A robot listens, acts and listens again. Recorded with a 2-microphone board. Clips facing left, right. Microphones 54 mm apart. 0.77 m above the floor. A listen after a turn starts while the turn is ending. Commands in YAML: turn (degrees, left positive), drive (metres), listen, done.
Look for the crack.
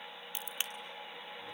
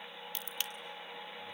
turn: 20
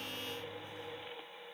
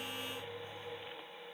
listen: true
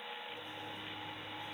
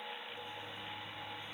done: "I heard a crack, but can't make it out now. It was about straight ahead or 140° left."